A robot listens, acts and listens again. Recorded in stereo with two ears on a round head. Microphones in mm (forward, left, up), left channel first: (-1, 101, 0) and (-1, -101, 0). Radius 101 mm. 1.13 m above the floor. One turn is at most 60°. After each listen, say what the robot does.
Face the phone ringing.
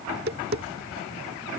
Keep listening.
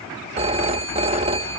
Turn 30° right.
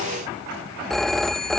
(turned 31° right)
Found it: a phone ringing, straight ahead.